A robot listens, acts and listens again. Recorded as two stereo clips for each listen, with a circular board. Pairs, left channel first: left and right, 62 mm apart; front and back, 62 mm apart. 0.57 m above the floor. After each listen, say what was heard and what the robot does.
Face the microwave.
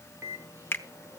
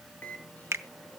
The microwave: 60° right. Turn 60° right.
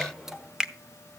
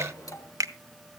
The microwave is now 10° right. Turn 10° right.
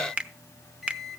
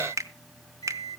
Found it: a microwave, straight ahead.